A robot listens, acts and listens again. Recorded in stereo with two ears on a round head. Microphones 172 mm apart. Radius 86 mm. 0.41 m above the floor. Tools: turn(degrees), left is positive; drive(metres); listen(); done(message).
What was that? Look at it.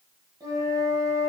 turn(degrees=-20)
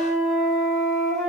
done("Facing the flute, under 1 m away.")